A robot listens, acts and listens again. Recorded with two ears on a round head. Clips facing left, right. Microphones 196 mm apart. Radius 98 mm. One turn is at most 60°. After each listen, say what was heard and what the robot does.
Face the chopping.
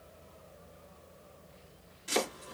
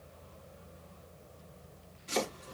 The chopping: about 60° left or 120° left. Turn 60° left.
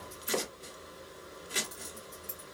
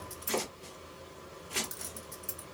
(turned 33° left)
So it is at 30° left. Turn 30° left.
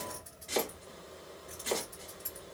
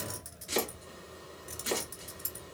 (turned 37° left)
The chopping is now 10° right. Turn 10° right.
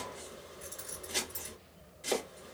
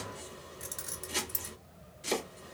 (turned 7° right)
Found it: chopping, straight ahead.